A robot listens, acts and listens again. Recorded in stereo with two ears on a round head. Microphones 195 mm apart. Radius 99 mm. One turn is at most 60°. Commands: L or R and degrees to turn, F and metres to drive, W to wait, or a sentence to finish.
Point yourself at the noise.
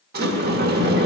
R50
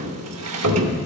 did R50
R60
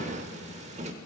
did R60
R30
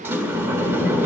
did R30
R10
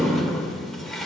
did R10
Facing the sliding door, under 1 m away.